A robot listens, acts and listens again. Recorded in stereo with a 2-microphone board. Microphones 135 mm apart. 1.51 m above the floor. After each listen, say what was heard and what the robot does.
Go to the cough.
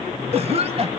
The cough: about 45° right or 135° right. Turn 45° right.
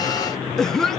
Drive 1.0 m forward.
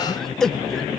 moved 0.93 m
Drive 1.0 m forward.
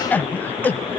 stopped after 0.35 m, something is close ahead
The cough is now 10° left. Turn 10° left.
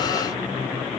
Keep listening.
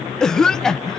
I am next to the cough.